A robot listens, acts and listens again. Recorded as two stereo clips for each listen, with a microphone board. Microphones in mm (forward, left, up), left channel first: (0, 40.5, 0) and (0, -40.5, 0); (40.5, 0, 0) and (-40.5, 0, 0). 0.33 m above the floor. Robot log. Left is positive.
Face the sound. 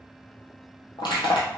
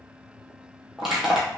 note: The crushing: 90° left.
cmd yaw +90
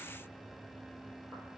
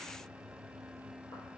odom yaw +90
cmd idle
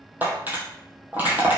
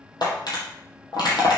note: The crushing is now 20° right.
cmd yaw -20
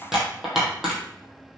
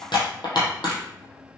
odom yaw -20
end: Found it: crushing, straight ahead.